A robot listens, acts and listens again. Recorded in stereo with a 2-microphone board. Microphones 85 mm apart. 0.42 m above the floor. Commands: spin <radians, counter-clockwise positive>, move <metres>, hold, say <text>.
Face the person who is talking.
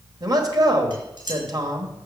spin -0.87
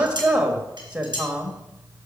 spin -0.26
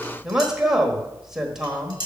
say Found it: a man speaking, straight ahead.